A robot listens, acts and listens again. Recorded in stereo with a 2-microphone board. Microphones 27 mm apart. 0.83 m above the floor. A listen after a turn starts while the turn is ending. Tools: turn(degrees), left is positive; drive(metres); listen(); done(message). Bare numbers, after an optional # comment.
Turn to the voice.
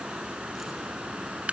listen()
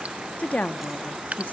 # The woman speaking: about 60° left or 120° left.
turn(60)
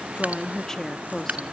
# So it is at 10° left.
turn(10)
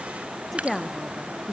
done("Found it: a woman speaking, straight ahead, 1 to 2 m away.")